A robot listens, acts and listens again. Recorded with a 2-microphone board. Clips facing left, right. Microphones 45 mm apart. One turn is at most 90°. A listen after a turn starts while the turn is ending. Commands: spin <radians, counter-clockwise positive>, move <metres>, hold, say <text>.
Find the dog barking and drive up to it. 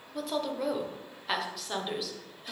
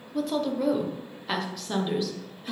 hold
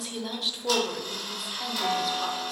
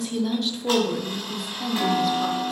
hold
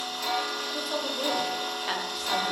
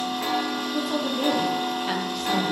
say I can't make out a dog barking to turn to.